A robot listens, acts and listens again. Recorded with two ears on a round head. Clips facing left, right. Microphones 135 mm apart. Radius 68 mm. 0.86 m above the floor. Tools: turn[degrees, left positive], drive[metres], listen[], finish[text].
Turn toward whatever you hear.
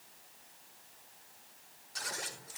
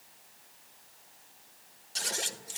Thought: The scissors: about 35° right or 145° right.
Action: turn[-35]
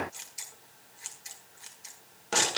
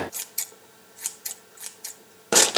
Thought: So it is at 115° right.
Action: turn[-115]
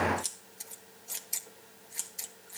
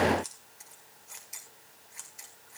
Thought: The scissors is now 35° left.
Action: turn[35]
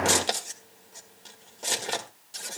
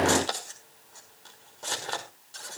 Thought: The scissors is now 20° left.
Action: turn[20]
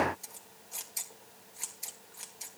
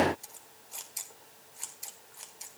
Action: finish[Found it: scissors, straight ahead, 1 to 2 m away.]